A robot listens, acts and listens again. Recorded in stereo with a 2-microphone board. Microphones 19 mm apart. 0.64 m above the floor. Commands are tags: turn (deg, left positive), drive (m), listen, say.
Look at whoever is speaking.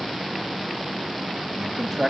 <turn deg="-20"/>
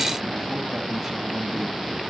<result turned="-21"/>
<listen/>
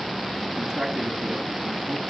<turn deg="-30"/>
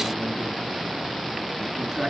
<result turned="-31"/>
<turn deg="15"/>
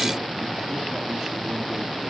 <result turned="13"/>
<listen/>
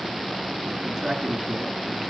<say>Facing the man speaking, over 4 m away.</say>